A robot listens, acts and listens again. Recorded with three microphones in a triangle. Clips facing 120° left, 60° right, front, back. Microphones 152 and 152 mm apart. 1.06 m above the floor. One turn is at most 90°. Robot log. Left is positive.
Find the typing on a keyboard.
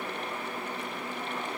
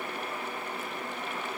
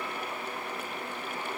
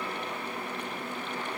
cmd idle
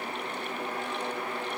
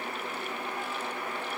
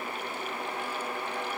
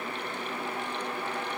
cmd idle
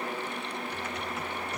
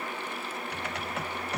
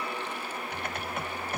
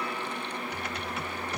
note: The typing on a keyboard: 40° right.
cmd yaw -40
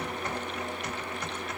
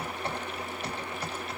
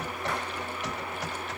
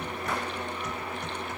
end: Found it: typing on a keyboard, straight ahead.